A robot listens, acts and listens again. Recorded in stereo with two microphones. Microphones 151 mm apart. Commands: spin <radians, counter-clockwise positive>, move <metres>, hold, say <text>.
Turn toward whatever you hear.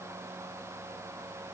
hold
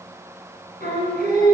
spin 1.57
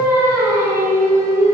spin -0.35
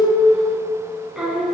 say Found it: singing, straight ahead, over 4 m away.